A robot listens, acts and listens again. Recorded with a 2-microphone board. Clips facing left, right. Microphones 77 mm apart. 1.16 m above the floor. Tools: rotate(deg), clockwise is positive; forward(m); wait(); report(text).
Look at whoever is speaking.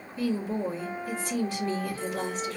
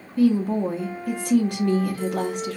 rotate(60)
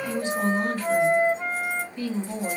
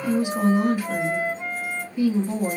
rotate(15)
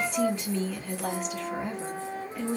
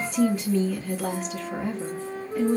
report("Found it: a woman speaking, straight ahead.")